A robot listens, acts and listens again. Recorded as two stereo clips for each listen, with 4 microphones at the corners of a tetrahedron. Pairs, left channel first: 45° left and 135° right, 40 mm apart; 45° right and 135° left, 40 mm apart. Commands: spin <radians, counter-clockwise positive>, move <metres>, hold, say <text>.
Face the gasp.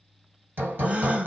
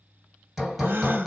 spin 2.97
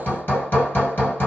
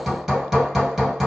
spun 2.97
say I heard a gasp from this way, but can't make it out now.